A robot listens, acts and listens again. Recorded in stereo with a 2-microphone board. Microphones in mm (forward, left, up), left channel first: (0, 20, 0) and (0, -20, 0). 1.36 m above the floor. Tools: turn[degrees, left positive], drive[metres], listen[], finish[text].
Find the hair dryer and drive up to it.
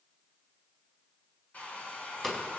Thought: The hair dryer: about 40° left or 140° left.
Action: turn[40]
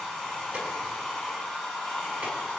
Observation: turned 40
Action: drive[1.0]
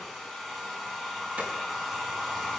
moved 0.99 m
Action: drive[1.0]
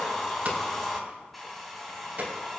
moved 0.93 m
Action: drive[1.0]
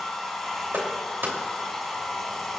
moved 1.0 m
Thought: The hair dryer is now 10° left.
Action: turn[10]
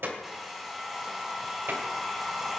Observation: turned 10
Action: drive[1.0]
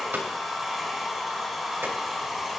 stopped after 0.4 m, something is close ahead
Action: finish[I am next to the hair dryer.]